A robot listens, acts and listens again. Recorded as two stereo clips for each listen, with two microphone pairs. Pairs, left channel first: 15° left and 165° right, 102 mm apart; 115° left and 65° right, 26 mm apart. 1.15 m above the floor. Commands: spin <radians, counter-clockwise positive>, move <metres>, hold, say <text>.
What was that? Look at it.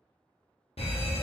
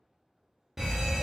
spin 0.17
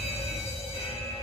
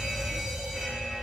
say Found it: an alarm, straight ahead, under 1 m away.